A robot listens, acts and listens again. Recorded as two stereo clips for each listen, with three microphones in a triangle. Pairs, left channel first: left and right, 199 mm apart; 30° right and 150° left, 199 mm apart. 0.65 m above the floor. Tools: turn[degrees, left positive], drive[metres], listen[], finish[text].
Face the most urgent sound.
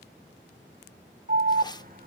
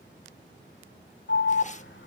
Thought: The alarm: 45° right.
Action: turn[-45]
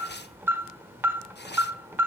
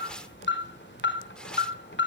Thought: The alarm is now 10° right.
Action: turn[-10]
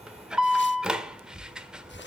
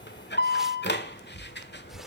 Action: finish[Facing the alarm, 1 to 2 m away.]